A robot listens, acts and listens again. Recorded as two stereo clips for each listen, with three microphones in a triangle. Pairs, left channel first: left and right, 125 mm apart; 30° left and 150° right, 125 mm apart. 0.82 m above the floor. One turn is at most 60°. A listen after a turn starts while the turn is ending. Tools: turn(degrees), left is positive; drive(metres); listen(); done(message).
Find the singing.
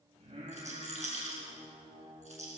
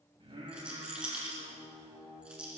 turn(degrees=-60)
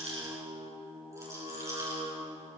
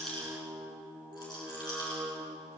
turn(degrees=-45)
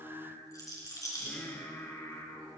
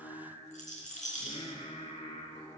turn(degrees=25)
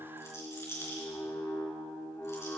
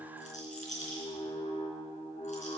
turn(degrees=20)
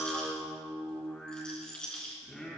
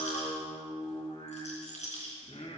done("Found it: singing, straight ahead, 2 to 4 m away.")